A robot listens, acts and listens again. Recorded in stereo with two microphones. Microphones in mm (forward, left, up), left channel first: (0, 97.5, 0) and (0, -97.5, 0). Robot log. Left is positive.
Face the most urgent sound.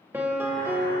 cmd idle
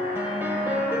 cmd idle
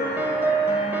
end: I can't make out anything urgent to turn to.